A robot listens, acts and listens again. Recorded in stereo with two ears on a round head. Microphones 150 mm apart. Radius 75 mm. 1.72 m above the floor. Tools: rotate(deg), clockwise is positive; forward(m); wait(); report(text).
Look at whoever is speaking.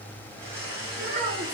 rotate(70)
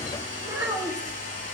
rotate(15)
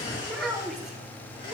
report("Facing the child speaking, 2 to 4 m away.")